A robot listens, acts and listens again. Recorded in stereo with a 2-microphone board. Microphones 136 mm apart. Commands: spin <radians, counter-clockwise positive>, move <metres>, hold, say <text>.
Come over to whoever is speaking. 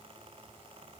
hold
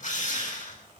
hold
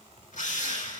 say I can't make out anyone speaking, only a drill.